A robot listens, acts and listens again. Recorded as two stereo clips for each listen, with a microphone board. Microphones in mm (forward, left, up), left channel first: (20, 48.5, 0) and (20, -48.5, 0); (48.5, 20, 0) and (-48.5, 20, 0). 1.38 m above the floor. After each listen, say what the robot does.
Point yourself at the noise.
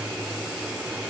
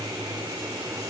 Keep listening.
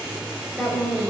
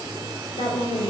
Facing the woman speaking, over 4 m away.